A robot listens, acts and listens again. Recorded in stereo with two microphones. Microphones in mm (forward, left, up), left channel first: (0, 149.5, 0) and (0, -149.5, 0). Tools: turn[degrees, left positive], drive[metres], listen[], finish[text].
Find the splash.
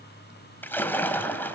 Action: turn[30]
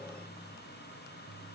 Action: listen[]
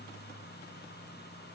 Action: finish[I heard a splash, but can't make it out now. It was about 25° right or 145° left.]